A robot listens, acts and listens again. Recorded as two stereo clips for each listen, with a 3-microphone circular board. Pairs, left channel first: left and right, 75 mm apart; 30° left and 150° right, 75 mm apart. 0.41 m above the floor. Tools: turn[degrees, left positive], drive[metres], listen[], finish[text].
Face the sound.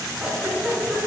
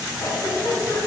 Thought: The giggle: 10° right.
Action: turn[-10]
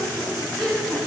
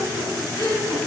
Action: finish[Found it: a giggle, straight ahead.]